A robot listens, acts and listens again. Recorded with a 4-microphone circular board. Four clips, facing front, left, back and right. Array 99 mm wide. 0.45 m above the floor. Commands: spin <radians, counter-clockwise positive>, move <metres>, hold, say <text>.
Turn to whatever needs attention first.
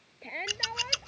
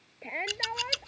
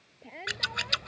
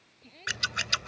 spin 1.22
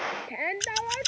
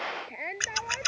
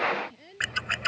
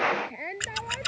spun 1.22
say Facing the shout.